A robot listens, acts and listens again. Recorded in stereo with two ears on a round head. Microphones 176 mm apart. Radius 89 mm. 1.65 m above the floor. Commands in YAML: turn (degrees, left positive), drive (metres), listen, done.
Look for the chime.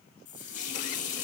listen: true
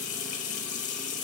listen: true
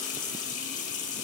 done: "I can't make out a chime to turn to."